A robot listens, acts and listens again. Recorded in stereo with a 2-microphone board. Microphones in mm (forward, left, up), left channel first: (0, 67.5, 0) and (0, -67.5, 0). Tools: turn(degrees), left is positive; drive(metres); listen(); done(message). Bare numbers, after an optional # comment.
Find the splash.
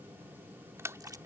# The splash: about 20° right or 160° right.
turn(-20)
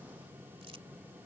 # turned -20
listen()
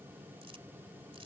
done("I heard a splash, but can't make it out now. It was about straight ahead or 140° right.")